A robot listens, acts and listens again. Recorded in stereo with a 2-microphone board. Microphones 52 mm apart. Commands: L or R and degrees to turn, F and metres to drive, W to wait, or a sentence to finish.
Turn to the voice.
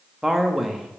R30
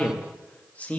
L25
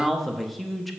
Facing the man speaking.